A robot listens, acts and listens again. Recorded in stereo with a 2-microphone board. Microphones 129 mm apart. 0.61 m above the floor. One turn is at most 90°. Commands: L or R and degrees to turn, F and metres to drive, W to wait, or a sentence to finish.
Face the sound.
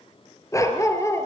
L20
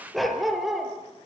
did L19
Facing the dog barking, over 4 m away.